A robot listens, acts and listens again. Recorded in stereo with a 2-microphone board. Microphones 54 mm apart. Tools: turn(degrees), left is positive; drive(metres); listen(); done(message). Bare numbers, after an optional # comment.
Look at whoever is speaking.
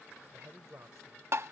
# The man speaking: about 70° right or 110° right.
turn(-70)
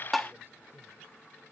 listen()
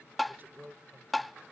# So it is at 40° right.
turn(-40)
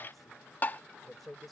done("Facing the man speaking.")